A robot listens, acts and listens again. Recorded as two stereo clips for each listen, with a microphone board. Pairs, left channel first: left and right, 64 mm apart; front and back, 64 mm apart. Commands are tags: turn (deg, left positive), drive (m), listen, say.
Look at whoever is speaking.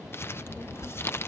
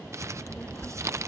<turn deg="55"/>
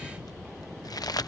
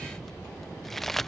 <say>Found it: a child speaking, straight ahead.</say>